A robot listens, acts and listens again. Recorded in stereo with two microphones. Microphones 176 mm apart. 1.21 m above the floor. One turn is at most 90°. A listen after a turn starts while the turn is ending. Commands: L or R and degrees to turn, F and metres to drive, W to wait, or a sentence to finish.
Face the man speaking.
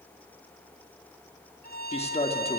L35
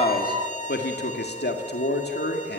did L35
L90
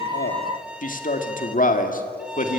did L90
L50
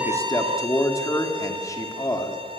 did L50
L15
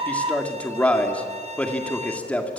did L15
Facing the man speaking.